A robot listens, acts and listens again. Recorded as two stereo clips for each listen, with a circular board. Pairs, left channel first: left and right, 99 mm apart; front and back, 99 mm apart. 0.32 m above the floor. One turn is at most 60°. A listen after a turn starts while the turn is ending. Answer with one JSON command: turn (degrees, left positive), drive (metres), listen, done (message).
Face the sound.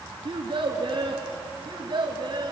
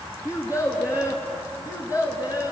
{"turn": -50}
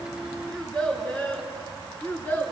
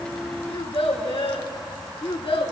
{"turn": 20}
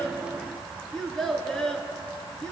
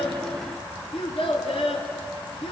{"turn": 10}
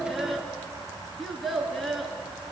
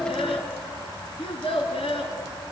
{"done": "Facing the child speaking."}